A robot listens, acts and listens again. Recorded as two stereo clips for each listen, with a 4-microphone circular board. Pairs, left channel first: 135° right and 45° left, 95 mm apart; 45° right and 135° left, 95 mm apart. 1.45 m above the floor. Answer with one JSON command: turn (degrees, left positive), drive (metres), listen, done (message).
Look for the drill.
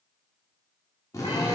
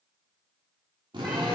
{"turn": 170}
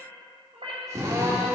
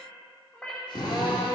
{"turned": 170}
{"turn": -10}
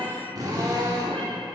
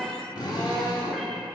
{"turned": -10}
{"done": "Found it: a drill, straight ahead, 2 to 4 m away."}